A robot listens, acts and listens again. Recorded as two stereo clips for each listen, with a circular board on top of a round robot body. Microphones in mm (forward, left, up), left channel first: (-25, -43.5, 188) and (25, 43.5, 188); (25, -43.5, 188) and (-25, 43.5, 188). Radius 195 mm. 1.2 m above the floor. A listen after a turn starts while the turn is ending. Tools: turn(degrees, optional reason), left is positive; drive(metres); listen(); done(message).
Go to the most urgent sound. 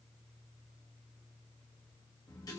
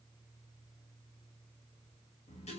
listen()
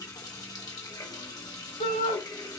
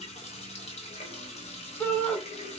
turn(degrees=-120, reason="The shout: 120° right.")
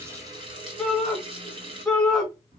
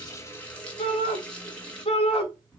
turn(degrees=-35, reason="The shout is now 35° right.")
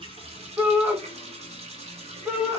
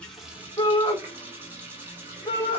drive(metres=1.0)
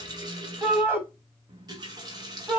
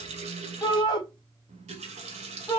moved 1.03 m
turn(degrees=-10, reason="The shout is now 10° right.")
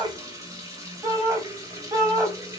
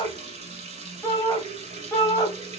drive(metres=1.0)
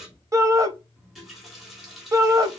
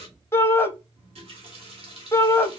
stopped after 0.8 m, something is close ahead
done("Arrived at the shout, straight ahead.")